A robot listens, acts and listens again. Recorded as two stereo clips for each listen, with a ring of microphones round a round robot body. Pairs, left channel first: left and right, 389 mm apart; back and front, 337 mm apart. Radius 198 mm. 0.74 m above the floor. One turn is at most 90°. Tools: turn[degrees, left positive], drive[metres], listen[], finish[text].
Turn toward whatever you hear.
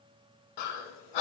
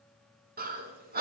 Thought: The breathing: 65° left.
Action: turn[65]
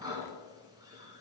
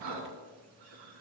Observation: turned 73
Thought: The breathing is now 10° right.
Action: turn[-10]
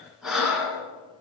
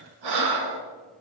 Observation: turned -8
Action: finish[Facing the breathing.]